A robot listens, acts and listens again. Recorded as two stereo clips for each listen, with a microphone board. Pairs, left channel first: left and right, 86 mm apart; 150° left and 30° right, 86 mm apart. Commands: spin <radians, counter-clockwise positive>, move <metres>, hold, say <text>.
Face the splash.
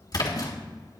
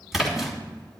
spin 0.96
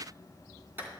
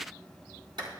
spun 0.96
say I heard a splash from this way, but can't make it out now.